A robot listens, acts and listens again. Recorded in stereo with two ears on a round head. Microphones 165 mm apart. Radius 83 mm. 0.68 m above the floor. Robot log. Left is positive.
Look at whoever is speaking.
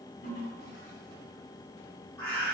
cmd idle
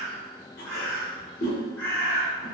cmd idle
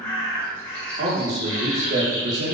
note: The man speaking: about 40° right or 140° right.
cmd yaw -40
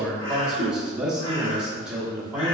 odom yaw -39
end: Found it: a man speaking, straight ahead.